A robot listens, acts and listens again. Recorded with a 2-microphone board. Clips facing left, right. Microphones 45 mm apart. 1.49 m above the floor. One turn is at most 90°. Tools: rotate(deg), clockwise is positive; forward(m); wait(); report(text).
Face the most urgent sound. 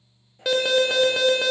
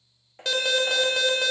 rotate(-30)
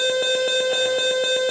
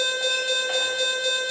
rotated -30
rotate(-90)
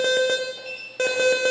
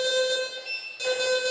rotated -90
rotate(-50)
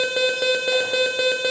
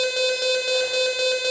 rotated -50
rotate(-15)
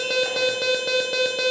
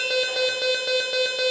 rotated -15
report("Found it: an alarm, straight ahead.")